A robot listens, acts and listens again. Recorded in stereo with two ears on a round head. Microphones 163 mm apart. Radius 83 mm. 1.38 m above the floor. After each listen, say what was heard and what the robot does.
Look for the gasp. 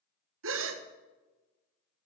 The gasp: about 70° right or 110° right. Turn 70° right.
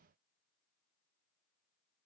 Keep listening.
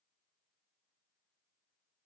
I heard a gasp, but can't make it out now. It was about straight ahead or 40° right.